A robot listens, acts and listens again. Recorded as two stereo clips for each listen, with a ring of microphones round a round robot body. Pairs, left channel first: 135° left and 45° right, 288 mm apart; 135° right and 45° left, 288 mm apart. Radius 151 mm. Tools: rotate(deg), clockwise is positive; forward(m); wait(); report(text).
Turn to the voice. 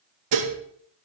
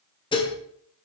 wait()
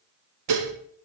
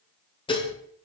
wait()
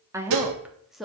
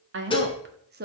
rotate(-45)
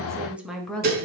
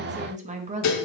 rotate(-55)
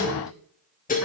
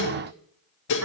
wait()
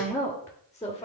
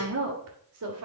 rotate(-60)
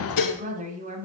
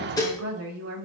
rotate(-10)
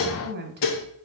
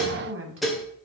report("Found it: a woman speaking, straight ahead.")